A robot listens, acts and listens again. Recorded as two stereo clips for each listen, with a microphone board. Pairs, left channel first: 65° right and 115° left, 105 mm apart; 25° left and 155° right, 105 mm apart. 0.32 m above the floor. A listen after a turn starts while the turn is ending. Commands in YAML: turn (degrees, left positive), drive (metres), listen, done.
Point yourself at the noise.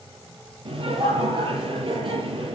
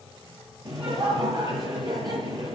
turn: 150
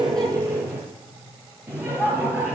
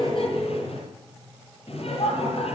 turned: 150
turn: 40
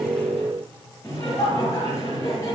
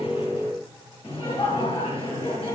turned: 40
turn: -10
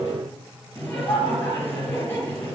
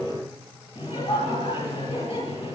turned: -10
done: "Facing the laughter."